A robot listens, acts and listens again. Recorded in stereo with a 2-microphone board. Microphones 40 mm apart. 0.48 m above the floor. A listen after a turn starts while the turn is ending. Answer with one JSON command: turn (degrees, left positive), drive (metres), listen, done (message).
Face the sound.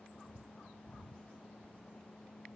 {"listen": true}
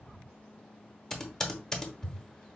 {"turn": 30}
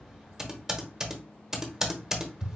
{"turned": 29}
{"turn": -15}
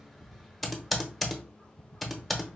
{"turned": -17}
{"done": "Facing the typing on a keyboard."}